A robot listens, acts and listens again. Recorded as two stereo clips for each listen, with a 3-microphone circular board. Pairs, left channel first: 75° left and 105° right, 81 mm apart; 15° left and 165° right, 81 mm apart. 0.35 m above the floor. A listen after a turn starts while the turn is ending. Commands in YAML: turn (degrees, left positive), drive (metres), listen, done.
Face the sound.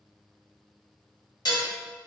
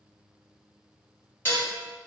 turn: 75
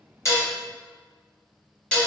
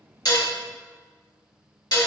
done: "Facing the dishes clattering, 1 to 2 m away."